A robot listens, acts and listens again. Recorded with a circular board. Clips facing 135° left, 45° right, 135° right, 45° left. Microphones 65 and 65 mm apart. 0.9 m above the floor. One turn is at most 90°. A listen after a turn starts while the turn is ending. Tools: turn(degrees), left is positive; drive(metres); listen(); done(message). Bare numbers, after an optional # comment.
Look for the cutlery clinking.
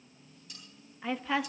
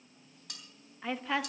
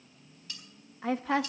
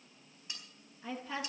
# The cutlery clinking: 25° right.
turn(-25)
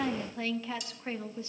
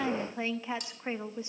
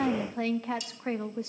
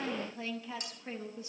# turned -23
done("Found it: cutlery clinking, straight ahead.")